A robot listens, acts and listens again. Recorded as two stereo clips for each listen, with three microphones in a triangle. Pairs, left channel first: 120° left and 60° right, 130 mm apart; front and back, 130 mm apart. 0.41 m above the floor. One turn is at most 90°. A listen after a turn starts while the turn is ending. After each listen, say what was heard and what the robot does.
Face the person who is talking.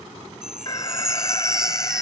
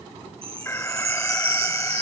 Keep listening.
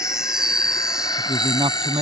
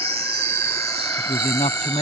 The man speaking: 20° right. Turn 20° right.
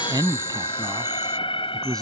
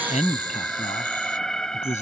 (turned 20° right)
Found it: a man speaking, straight ahead.